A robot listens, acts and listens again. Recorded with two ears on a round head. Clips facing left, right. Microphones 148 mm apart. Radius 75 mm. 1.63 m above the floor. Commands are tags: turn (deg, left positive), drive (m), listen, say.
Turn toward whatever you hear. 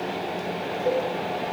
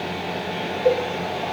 <turn deg="-45"/>
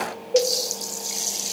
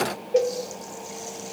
<say>Facing the cowbell, under 1 m away.</say>